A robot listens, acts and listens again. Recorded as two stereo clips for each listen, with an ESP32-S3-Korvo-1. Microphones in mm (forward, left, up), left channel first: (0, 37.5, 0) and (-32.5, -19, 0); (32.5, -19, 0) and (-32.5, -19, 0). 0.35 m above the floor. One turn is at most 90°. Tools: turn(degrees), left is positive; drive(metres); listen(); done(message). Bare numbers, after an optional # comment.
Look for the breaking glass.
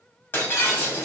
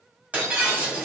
# The breaking glass: 115° left.
turn(90)
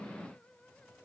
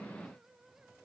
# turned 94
# Nothing new. It was at 20° left.
turn(20)
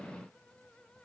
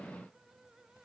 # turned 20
done("I heard breaking glass from this way, but can't make it out now.")